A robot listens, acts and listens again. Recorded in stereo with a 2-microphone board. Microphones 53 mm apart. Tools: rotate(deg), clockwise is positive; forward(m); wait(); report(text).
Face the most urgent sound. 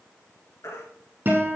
rotate(-65)
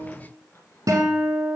wait()
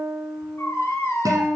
rotate(-50)
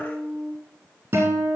wait()
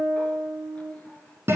wait()
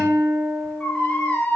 rotate(-20)
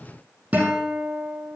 wait()
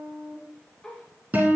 wait()
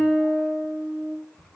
report("Facing the baby crying, 2 to 4 m away.")